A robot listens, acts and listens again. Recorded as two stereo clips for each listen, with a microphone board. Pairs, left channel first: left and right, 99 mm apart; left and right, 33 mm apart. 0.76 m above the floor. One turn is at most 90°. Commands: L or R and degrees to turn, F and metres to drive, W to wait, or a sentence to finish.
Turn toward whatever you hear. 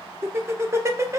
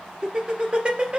R30
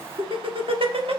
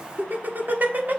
R90
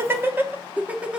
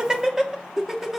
R10
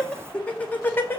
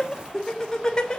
L25
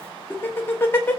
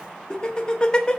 L20
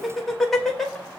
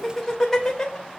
Found it: laughter, straight ahead.